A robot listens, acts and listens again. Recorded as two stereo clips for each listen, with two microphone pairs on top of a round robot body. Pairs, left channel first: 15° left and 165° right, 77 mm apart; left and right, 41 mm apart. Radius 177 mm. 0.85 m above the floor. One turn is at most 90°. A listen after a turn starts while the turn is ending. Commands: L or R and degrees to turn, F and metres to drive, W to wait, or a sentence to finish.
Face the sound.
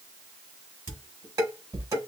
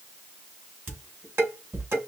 R90
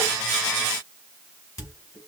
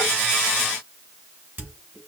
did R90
R35
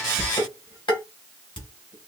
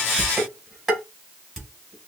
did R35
Found it: dishes clattering, straight ahead, 2 to 4 m away.